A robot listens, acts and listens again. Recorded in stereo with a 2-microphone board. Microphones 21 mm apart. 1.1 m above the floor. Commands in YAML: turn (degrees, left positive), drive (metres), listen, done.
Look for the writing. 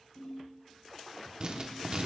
turn: -40
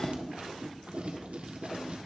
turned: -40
turn: -100
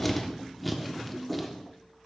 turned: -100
done: "Found it: writing, straight ahead, 1 to 2 m away."